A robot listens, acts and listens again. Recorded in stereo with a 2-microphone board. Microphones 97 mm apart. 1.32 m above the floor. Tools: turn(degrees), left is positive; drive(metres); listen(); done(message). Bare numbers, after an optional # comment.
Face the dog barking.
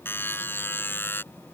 listen()
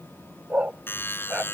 turn(-30)
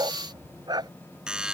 # So it is at 135° right.
turn(-135)
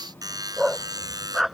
done("Facing the dog barking.")